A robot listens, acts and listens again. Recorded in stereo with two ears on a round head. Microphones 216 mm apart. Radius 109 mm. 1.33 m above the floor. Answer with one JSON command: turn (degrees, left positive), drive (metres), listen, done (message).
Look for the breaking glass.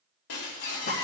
{"turn": 70}
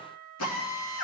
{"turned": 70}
{"listen": true}
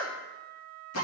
{"done": "I heard breaking glass, but can't make it out now. It was about straight ahead or 40° left."}